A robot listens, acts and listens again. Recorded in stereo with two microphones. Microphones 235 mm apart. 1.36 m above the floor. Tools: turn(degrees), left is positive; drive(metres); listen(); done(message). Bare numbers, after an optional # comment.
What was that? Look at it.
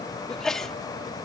turn(30)
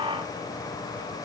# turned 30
listen()
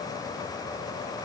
done("I heard a sneeze, but can't make it out now. It was about 30° right or 150° left.")